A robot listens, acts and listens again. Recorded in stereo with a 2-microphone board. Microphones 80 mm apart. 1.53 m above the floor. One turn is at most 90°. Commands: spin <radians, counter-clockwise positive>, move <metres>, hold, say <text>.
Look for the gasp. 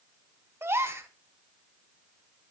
spin -0.52
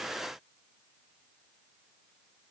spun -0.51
hold
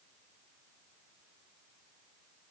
say I heard a gasp, but can't make it out now. It was about straight ahead or 120° right.